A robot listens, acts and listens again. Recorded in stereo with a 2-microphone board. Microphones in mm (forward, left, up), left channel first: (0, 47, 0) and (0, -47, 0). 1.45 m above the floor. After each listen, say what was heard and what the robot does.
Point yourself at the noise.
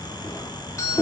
The doorbell: about 35° left or 145° left. Turn 35° left.
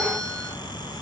Keep listening.
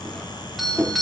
Facing the doorbell, 2 to 4 m away.